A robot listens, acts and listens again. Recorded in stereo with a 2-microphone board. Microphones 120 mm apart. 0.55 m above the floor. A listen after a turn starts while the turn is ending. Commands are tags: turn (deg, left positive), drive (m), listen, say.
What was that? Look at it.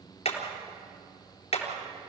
<turn deg="60"/>
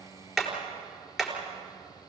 <say>Found it: hammering, straight ahead.</say>